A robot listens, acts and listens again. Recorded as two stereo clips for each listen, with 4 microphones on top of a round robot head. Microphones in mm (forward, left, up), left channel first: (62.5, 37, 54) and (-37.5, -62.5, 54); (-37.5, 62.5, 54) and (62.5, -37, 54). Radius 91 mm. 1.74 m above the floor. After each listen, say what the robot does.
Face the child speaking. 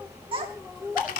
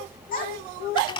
Turn 170° left.
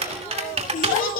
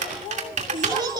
Turn 20° left.
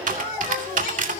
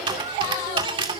Keep listening.
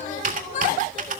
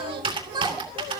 Turn 15° left.
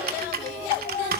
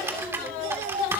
Found it: a child speaking, straight ahead.